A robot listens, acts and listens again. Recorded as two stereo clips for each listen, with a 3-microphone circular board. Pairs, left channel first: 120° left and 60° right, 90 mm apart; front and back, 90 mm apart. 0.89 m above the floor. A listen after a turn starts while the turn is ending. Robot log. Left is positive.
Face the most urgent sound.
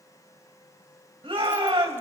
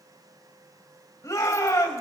note: The shout: 50° right.
cmd yaw -50
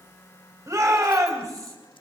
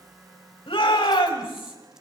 note: The shout is now 10° right.
cmd yaw -10
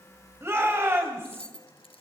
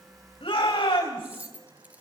end: Found it: a shout, straight ahead.